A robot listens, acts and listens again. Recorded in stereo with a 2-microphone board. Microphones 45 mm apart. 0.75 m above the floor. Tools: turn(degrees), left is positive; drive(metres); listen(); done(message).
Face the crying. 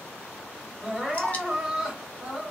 turn(degrees=-30)
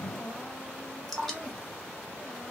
turn(degrees=-140)
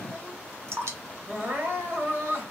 turn(degrees=-55)
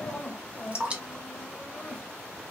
turn(degrees=10)
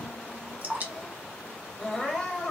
done("Facing the crying, 1 to 2 m away.")